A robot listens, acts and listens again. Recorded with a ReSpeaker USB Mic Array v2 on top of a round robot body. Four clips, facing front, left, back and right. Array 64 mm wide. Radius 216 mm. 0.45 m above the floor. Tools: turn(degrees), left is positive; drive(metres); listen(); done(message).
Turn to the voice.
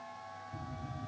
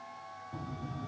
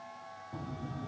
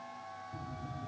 listen()
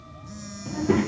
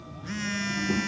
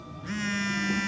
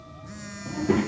turn(degrees=-30)
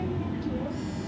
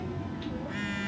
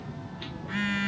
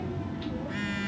done("Found it: a child speaking, straight ahead.")